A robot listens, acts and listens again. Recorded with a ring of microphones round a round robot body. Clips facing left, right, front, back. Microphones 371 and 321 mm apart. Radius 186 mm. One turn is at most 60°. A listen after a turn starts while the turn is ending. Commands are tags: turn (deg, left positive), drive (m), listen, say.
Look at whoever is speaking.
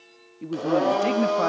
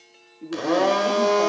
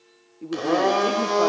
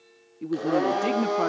<turn deg="60"/>
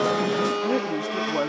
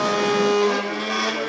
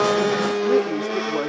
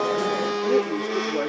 <turn deg="60"/>
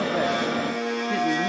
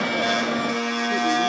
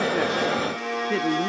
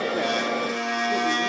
<turn deg="10"/>
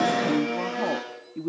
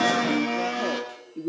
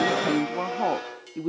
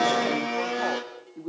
<turn deg="30"/>
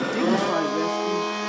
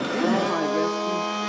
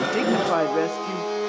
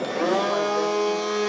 <listen/>
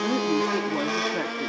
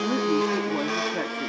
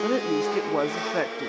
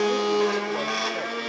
<listen/>
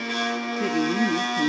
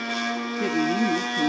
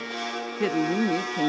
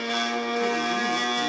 <say>Facing where the woman speaking came from. I can't hear it now.</say>